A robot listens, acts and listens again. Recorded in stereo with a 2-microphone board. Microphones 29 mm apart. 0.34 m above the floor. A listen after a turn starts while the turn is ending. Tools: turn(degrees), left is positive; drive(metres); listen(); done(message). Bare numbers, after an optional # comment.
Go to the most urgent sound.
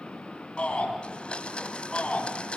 # The shout: about 45° left or 135° left.
turn(45)
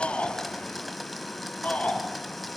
# So it is at 85° left.
turn(85)
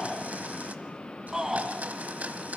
# The shout is now 15° right.
turn(-15)
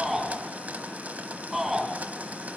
drive(1.0)
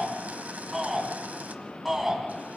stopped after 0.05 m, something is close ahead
done("Blocked. The shout is further on, straight ahead.")